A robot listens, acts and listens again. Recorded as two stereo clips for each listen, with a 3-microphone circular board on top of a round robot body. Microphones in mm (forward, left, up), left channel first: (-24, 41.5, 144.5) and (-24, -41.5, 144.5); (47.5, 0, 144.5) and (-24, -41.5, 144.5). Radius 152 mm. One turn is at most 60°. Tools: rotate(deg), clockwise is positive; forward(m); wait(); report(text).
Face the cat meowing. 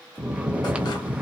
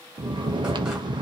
wait()
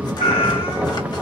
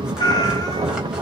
rotate(-60)
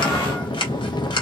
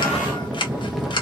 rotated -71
rotate(-10)
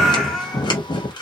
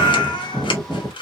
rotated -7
report("Facing the cat meowing, under 1 m away.")